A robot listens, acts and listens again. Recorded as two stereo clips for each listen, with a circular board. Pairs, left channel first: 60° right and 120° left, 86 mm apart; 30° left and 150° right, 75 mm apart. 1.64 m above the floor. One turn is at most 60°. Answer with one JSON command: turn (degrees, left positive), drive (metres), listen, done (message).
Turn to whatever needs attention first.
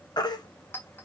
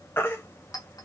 {"turn": -30}
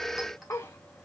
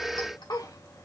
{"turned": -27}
{"listen": true}
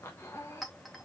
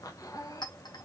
{"listen": true}
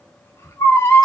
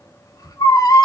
{"done": "Found it: a baby crying, straight ahead, 1 to 2 m away."}